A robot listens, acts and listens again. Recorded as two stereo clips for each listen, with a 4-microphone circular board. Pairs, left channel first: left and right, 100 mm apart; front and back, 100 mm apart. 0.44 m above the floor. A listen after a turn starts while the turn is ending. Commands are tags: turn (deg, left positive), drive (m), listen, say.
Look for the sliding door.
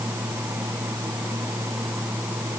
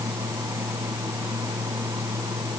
<listen/>
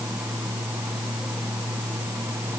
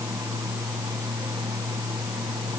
<listen/>
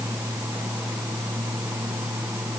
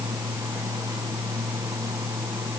<say>I can't make out a sliding door to turn to.</say>